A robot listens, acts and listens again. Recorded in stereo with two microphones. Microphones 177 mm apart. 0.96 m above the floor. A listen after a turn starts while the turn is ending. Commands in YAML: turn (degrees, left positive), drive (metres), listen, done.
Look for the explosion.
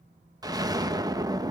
turn: -20
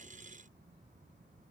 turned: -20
listen: true
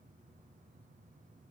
done: "I heard an explosion, but can't make it out now. It was about straight ahead or 140° right."